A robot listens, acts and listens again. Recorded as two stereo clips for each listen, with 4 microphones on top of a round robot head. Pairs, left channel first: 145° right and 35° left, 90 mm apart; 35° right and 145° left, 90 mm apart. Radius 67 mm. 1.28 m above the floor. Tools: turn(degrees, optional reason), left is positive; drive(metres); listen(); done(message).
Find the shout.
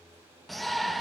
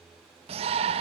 turn(degrees=130, reason="The shout: 130° left.")
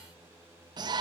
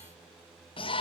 turn(degrees=-10, reason="The shout is now 10° right.")
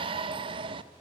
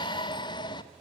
done("Facing the shout.")